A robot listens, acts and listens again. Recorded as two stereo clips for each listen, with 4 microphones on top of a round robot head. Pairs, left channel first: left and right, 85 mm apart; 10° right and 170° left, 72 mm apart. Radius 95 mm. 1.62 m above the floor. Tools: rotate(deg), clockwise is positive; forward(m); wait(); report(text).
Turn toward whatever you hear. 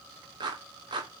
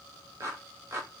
rotate(130)
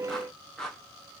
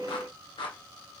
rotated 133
report("Found it: a clap, straight ahead.")